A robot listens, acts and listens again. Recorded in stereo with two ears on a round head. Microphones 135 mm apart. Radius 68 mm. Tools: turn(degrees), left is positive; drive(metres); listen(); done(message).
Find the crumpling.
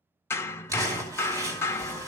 turn(degrees=-20)
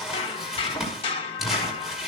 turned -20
done("Facing the crumpling.")